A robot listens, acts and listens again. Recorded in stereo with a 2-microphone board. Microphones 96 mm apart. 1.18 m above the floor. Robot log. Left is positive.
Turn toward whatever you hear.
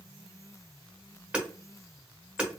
cmd yaw -30
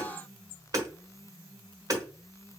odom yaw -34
note: So it is at 130° right.
cmd yaw -130
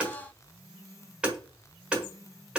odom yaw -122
note: The hammering is now 10° right.
cmd yaw -10
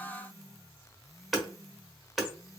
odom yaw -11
end: Found it: hammering, straight ahead, 1 to 2 m away.